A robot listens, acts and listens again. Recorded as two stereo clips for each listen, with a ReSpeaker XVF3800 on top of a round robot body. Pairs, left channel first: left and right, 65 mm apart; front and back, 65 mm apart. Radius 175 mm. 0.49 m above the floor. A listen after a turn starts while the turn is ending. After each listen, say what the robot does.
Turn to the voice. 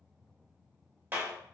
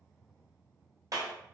Keep listening.
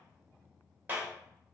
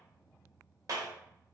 Keep listening.
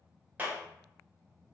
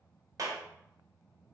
I can't make out anyone speaking, only a clap.